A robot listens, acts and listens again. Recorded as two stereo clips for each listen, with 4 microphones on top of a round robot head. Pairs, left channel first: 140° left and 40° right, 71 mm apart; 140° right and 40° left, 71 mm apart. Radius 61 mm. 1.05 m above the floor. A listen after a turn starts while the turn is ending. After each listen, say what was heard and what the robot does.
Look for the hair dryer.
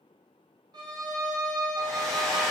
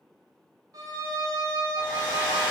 The hair dryer: 135° right. Turn 135° right.
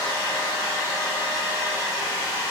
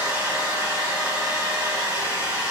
Facing the hair dryer.